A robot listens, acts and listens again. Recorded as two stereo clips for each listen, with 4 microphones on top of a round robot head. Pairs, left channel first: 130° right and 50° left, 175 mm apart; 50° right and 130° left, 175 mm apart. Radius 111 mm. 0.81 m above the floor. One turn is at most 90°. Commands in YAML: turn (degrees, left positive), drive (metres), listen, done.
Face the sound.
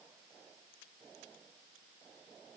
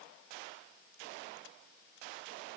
listen: true
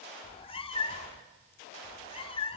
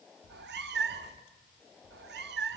turn: 90
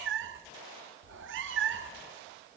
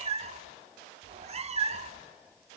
turn: 75
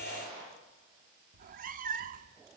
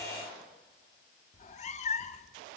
done: "Found it: a cat meowing, straight ahead."